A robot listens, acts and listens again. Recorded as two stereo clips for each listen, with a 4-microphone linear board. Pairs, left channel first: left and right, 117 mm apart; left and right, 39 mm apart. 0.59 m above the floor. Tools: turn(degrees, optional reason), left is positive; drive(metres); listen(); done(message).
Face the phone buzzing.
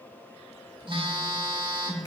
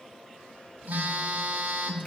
turn(degrees=-50, reason="The phone buzzing: about 50° right or 130° right.")
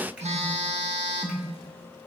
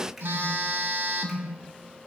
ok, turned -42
turn(degrees=-90, reason="So it is at 90° right.")
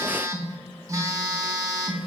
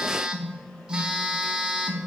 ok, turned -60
turn(degrees=-30, reason="The phone buzzing is now 30° right.")
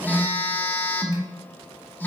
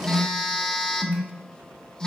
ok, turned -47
turn(degrees=20, reason="The phone buzzing is now 20° left.")
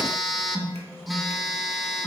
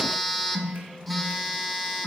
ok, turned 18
done("Found it: a phone buzzing, straight ahead, under 1 m away.")